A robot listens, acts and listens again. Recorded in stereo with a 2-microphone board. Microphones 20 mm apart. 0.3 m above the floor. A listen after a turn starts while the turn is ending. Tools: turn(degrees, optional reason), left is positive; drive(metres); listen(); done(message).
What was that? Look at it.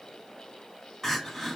turn(degrees=25, reason="The crying: about 25° left or 155° left.")
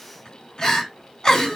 turn(degrees=130, reason="So it is at 130° left.")
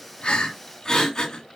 turn(degrees=30, reason="The crying is now 30° left.")
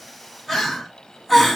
done("Facing the crying.")